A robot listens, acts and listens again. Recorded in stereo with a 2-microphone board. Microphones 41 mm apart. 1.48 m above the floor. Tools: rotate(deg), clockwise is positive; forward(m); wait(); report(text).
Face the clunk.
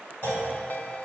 rotate(-65)
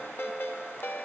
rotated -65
wait()
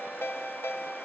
report("I heard a clunk, but can't make it out now. It was about straight ahead or 50° left.")